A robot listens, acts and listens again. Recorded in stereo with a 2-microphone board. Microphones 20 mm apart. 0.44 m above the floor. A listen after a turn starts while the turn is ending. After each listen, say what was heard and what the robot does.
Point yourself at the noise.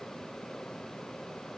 Keep listening.
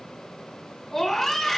The scream: about 15° left or 165° left. Turn 15° left.
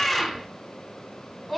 Found it: a scream, straight ahead.